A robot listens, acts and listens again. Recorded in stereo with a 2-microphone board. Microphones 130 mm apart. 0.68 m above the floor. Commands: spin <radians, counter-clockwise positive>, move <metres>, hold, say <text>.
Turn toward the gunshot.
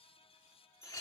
hold
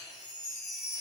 hold
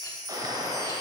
spin -0.52
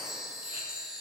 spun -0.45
hold
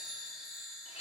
say I heard a gunshot, but can't make it out now. It was about 5° right or 125° right.